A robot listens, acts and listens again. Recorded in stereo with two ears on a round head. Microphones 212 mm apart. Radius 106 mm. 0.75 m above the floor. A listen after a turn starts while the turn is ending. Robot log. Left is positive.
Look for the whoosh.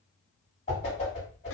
note: The whoosh: about 30° left or 150° left.
cmd yaw +30
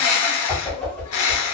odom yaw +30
end: Facing the whoosh, 1 to 2 m away.